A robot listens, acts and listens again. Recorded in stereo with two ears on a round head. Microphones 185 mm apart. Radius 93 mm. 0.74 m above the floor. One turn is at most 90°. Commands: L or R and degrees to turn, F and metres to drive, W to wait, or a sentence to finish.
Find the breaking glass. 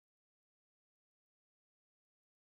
W
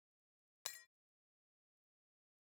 L60
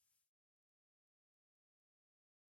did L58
W
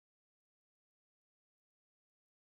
I heard breaking glass, but can't make it out now. It was about 5° left or 60° left.